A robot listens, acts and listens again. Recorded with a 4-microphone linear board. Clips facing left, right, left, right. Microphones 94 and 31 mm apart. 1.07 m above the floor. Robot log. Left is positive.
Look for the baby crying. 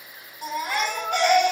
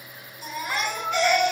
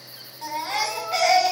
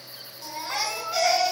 note: The baby crying: about 60° left or 120° left.
cmd yaw +60
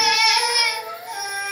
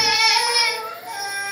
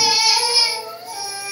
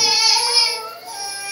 end: Found it: a baby crying, straight ahead, 2 to 4 m away.